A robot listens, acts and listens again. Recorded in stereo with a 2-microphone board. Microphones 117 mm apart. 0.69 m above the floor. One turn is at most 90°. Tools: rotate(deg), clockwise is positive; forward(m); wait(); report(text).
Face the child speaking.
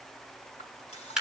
wait()
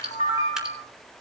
wait()
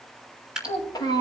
rotate(-40)
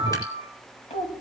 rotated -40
rotate(-90)
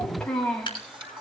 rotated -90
report("Facing the child speaking.")